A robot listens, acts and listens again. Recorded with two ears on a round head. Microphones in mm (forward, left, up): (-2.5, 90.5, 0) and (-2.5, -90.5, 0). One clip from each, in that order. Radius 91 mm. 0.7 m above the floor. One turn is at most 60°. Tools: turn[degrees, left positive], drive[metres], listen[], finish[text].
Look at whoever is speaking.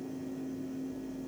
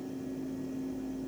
Action: listen[]
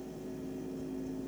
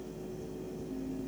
Action: listen[]
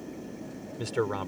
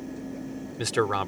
Thought: The man speaking: about 45° right or 135° right.
Action: turn[-45]
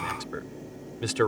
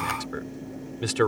Action: finish[Facing the man speaking.]